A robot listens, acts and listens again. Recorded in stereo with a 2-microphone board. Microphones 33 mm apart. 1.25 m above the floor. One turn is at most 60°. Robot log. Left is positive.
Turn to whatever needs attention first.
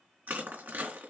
cmd idle
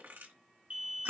note: The alarm: about 40° right or 140° right.
cmd yaw -40
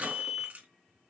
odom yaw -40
end: Found it: an alarm, straight ahead, 2 to 4 m away.